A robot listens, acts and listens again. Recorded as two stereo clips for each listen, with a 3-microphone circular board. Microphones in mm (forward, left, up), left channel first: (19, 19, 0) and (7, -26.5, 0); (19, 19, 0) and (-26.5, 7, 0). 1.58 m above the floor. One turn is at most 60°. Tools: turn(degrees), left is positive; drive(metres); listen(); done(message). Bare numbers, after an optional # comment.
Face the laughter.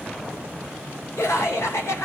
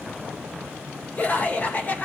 # The laughter: 70° left.
turn(60)
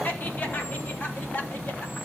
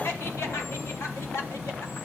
# The laughter is now 30° left.
turn(30)
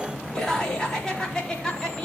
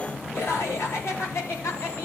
done("Facing the laughter, over 4 m away.")